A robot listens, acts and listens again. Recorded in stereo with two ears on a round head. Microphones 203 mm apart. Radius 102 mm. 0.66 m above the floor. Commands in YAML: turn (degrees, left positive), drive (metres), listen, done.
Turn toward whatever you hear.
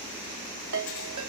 turn: -60
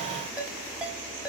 done: "Facing the ringtone."